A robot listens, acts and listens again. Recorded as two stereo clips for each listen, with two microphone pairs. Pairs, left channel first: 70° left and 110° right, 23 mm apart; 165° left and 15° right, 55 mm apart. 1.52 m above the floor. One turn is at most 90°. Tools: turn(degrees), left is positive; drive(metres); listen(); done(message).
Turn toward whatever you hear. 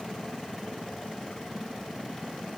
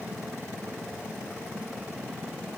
listen()
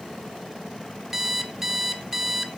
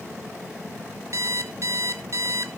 turn(degrees=-35)
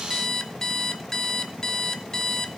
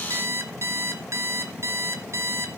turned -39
done("Facing the alarm clock, 1 to 2 m away.")